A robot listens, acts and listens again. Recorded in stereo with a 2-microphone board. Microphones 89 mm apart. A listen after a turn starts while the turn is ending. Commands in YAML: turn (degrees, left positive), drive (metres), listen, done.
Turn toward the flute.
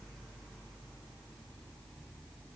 listen: true
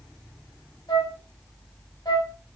turn: 60
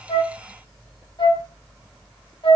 turn: 65
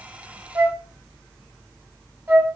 turn: -25
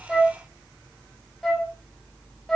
done: "Found it: a flute, straight ahead."